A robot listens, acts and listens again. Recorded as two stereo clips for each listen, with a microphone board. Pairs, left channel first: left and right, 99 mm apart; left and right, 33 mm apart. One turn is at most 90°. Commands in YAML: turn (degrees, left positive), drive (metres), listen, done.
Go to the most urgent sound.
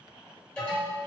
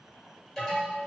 turn: 30
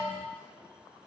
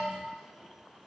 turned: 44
turn: 90
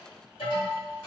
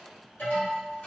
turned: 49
turn: 75
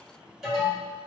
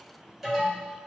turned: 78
drive: 1.0
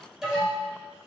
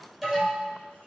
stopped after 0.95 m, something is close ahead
done: "Arrived at the alarm, straight ahead."